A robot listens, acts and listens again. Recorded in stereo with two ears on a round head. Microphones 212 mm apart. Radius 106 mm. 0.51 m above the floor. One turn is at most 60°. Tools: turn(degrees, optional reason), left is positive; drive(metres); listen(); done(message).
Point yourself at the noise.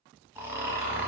turn(degrees=-30)
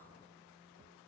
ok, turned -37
listen()
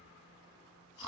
turn(degrees=25, reason="So it is at 25° left.")
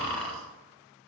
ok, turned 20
done("Facing the snoring, 1 to 2 m away.")